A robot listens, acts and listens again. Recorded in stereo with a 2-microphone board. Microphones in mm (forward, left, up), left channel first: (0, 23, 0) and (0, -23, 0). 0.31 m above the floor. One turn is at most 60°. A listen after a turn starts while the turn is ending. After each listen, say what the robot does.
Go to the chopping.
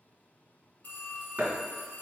Turn 40° right.
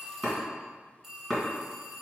Drive 1.0 m forward.
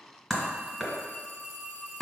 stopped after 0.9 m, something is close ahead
Arrived at the chopping, straight ahead.